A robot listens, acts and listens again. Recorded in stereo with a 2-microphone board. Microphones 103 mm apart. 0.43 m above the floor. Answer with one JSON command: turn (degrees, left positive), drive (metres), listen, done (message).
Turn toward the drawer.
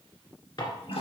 {"turn": 45}
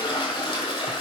{"listen": true}
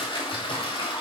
{"listen": true}
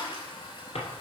{"turn": 90}
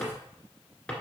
{"turn": 10}
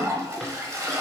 {"listen": true}
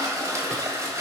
{"listen": true}
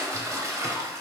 {"done": "I heard a drawer from this way, but can't make it out now."}